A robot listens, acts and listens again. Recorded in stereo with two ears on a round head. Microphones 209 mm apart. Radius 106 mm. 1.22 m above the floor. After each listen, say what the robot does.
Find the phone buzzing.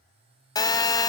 Turn 15° left.
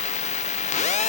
Turn 150° left.
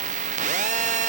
Turn 35° right.
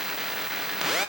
Facing the phone buzzing.